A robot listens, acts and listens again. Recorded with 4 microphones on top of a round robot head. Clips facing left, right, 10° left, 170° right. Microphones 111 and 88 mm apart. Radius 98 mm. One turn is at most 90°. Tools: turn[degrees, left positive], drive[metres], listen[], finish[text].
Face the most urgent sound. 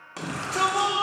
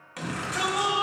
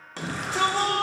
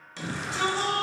Thought: The shout: 40° left.
Action: turn[40]
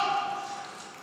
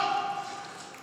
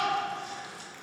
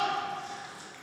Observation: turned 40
Action: finish[Found it: a shout, straight ahead, 1 to 2 m away.]